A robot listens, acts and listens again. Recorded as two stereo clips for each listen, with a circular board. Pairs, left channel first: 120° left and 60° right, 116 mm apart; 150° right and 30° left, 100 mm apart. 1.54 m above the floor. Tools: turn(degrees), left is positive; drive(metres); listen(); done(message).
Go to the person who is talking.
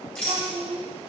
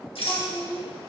turn(degrees=-80)
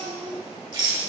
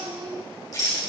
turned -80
turn(degrees=-25)
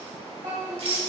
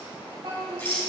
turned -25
turn(degrees=-10)
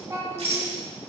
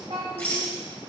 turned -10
drive(metres=1.0)
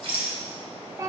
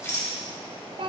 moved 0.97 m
drive(metres=1.0)
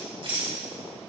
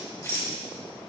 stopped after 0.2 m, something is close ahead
listen()
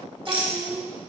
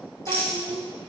done("Arrived at the child speaking, straight ahead.")